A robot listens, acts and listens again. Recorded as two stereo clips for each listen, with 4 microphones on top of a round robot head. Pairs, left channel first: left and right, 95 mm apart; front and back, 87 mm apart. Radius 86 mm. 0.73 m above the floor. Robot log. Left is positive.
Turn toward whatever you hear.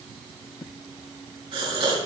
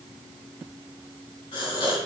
note: The gasp: 45° right.
cmd yaw -45
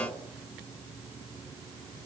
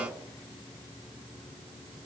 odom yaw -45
end: I heard a gasp from this way, but can't make it out now.